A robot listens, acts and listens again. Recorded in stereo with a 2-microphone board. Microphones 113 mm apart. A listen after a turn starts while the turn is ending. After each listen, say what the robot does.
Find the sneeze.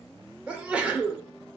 Turn 30° right.
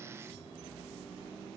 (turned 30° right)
Keep listening.
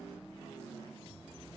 I heard a sneeze, but can't make it out now. It was about 20° left or 140° right.